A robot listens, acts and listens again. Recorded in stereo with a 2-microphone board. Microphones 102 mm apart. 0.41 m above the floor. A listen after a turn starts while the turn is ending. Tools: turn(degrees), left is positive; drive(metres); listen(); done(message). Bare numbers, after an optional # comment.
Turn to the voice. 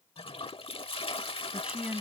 turn(-30)
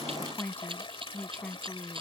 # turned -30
# So it is at 10° left.
turn(10)
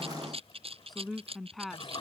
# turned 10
done("Found it: a woman speaking, straight ahead.")